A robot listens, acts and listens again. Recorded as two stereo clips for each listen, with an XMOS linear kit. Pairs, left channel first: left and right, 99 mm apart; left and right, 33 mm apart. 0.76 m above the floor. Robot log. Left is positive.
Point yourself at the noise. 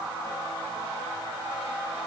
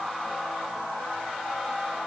cmd idle
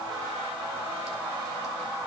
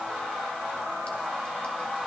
cmd idle
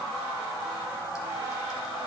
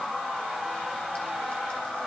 end: I can't make out anything.